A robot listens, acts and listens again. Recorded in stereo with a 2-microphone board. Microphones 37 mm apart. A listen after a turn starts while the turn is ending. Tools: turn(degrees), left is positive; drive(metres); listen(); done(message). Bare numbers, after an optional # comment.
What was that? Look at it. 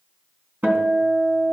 # The guitar: about 65° right or 115° right.
turn(-65)
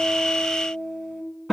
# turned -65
done("Facing the guitar.")